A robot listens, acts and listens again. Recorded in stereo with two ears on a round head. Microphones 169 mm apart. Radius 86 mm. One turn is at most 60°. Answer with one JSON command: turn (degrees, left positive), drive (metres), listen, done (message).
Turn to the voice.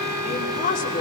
{"turn": 45}
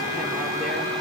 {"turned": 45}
{"listen": true}
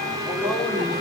{"listen": true}
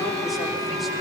{"done": "I heard a woman speaking, but can't make it out now. It was about straight ahead or 90° left."}